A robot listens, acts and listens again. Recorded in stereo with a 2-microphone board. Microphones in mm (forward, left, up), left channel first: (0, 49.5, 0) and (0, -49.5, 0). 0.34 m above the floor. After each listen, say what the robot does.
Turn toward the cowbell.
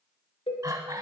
Turn 90° left.
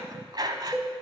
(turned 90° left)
Facing the cowbell, 1 to 2 m away.